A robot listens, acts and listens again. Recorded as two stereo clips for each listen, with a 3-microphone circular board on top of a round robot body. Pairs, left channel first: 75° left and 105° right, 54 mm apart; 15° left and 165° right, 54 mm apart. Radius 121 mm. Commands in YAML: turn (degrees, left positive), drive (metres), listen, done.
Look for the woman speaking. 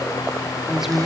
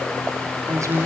turn: 170
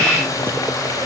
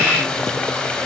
listen: true
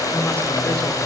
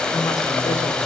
listen: true
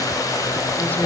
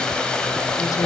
done: "Facing where the woman speaking came from. I can't hear it now."